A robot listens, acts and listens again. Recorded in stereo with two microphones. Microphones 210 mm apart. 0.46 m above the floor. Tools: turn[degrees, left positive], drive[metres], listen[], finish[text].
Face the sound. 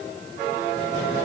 Action: listen[]
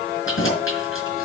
Action: turn[90]
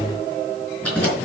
Action: finish[Facing the keys jangling.]